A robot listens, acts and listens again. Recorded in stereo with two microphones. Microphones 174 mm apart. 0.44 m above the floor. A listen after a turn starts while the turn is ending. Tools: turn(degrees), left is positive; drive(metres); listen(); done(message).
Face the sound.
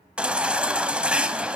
turn(degrees=-30)
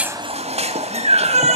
turn(degrees=-145)
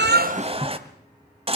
turn(degrees=-35)
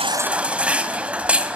done("Facing the baby crying, 1 to 2 m away.")